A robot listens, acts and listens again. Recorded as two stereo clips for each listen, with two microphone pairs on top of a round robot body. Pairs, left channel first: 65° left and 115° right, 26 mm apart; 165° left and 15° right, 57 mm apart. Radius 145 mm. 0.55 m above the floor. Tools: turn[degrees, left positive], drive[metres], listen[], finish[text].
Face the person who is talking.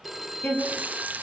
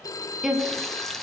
Thought: The woman speaking: 75° left.
Action: turn[75]
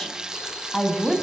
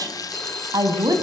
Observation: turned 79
Thought: The woman speaking is now 15° right.
Action: turn[-15]
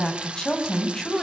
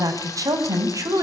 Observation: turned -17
Action: finish[Found it: a woman speaking, straight ahead.]